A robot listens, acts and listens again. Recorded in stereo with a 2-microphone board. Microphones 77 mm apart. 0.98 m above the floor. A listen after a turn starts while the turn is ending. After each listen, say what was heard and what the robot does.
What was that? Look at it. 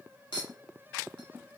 Turn 90° left.
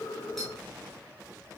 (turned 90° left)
Keep listening.
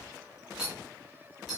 Facing the clink.